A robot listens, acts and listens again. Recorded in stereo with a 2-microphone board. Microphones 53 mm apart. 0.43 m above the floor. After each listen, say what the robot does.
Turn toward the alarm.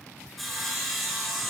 Keep listening.
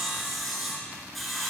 Keep listening.
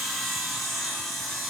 I can't make out an alarm to turn to.